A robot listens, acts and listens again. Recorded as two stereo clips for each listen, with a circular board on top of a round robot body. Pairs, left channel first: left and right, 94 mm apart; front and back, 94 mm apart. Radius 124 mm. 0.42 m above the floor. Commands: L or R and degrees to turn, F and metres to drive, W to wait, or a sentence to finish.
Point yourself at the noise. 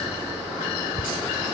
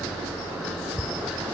R100
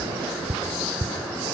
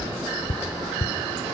R35
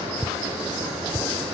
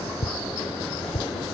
Found it: tapping, straight ahead, under 1 m away.